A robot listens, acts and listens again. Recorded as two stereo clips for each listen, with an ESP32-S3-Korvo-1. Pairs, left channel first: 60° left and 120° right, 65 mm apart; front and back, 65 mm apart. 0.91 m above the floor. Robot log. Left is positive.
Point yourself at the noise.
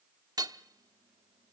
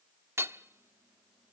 note: The hammering: 130° right.
cmd yaw -130
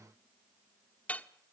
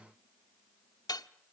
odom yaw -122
end: Facing the hammering, 1 to 2 m away.